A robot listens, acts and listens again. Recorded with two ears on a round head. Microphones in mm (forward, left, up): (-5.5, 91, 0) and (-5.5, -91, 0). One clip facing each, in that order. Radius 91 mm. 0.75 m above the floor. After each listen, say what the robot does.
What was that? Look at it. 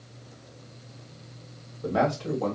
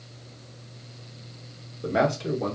Turn 20° right.
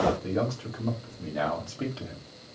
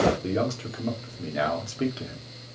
Turn 20° right.
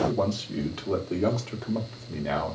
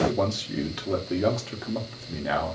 Turn 30° right.
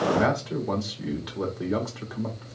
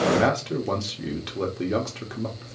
Turn 145° right.
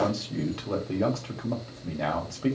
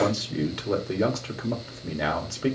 Turn 15° right.
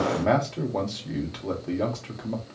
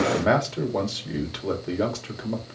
Turn 10° right.
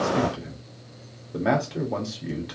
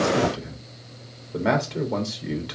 Found it: a man speaking, straight ahead.